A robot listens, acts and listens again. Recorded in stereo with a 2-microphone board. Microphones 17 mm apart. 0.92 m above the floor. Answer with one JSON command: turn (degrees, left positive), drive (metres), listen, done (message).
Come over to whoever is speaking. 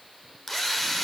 {"listen": true}
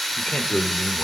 {"turn": 70}
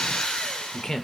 {"turn": 35}
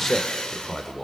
{"turn": 10}
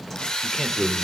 {"drive": 1.0}
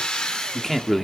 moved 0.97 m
{"drive": 1.0}
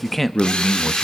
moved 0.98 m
{"drive": 1.0}
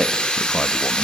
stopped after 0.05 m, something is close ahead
{"done": "I am next to the man speaking."}